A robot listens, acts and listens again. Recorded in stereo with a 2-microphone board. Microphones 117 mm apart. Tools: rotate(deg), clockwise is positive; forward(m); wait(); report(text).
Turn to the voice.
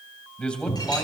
rotate(-30)
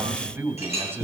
rotate(20)
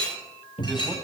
wait()
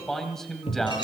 report("Found it: a man speaking, straight ahead.")